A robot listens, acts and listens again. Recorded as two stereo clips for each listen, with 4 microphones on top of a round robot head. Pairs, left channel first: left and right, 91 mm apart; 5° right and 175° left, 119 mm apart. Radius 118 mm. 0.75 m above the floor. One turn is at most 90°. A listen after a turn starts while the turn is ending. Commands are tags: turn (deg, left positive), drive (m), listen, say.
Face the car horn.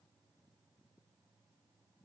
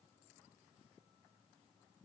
<listen/>
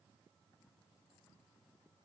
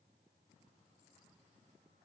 <listen/>
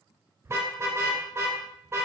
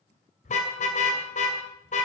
<turn deg="-25"/>
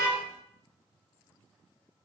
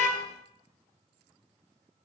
<listen/>
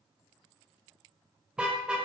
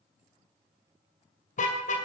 <turn deg="-10"/>
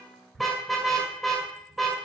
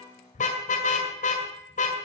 <say>Found it: a car horn, straight ahead.</say>